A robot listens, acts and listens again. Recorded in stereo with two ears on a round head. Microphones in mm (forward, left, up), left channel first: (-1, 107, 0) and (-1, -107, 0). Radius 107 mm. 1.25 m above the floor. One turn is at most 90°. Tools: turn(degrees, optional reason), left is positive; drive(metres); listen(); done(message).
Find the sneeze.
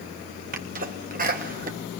turn(degrees=-40, reason="The sneeze: about 40° right or 140° right.")
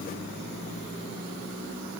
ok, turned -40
listen()
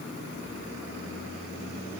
done("I heard a sneeze, but can't make it out now. It was about straight ahead or 100° right.")